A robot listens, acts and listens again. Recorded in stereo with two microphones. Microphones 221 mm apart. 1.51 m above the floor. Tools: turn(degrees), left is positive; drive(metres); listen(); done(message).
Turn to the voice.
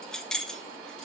listen()
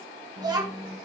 turn(degrees=-20)
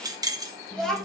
done("Facing the child speaking.")